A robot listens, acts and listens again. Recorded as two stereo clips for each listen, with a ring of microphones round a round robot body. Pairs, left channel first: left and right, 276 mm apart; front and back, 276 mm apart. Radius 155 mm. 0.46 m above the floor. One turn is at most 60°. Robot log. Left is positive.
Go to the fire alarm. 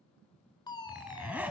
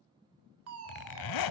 note: The fire alarm: 165° left.
cmd yaw +60
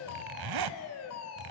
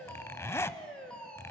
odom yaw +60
note: The fire alarm is now 85° left.
cmd yaw +60
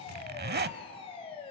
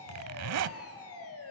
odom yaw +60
note: The fire alarm is now 20° left.
cmd yaw +20
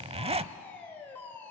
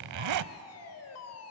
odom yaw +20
note: The fire alarm is now 10° left.
cmd yaw +10
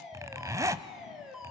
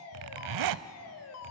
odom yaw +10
cmd fwd 1.0
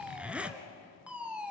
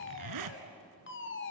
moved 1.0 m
cmd fwd 1.0
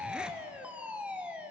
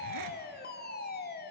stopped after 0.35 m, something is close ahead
end: I am next to the fire alarm.